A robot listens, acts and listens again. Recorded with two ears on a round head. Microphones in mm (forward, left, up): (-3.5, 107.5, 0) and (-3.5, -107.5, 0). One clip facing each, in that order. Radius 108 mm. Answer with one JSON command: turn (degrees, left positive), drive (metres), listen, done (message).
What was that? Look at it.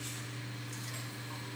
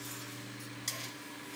{"listen": true}
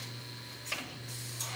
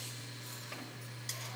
{"listen": true}
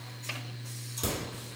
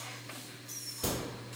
{"turn": 60}
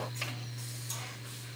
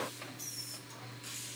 {"listen": true}
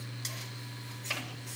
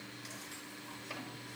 {"done": "I heard a crack, but can't make it out now. It was about straight ahead or 60° left."}